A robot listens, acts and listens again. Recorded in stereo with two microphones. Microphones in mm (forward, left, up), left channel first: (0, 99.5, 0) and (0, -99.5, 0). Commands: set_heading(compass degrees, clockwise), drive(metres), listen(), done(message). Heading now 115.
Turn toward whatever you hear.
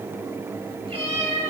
set_heading(145)
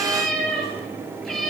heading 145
done("Facing the cat meowing.")